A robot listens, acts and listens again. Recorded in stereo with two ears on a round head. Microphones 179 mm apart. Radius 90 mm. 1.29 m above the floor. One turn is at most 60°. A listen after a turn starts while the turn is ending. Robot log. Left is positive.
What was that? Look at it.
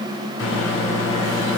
note: The microwave: about 75° left or 105° left.
cmd yaw +60
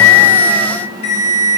note: So it is at 35° left.
cmd yaw +35
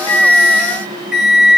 end: Facing the microwave, 1 to 2 m away.